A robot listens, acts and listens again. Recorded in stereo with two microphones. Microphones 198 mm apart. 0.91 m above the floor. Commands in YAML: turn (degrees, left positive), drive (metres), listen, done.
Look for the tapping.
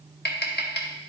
turn: 60
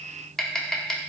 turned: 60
done: "Found it: tapping, straight ahead."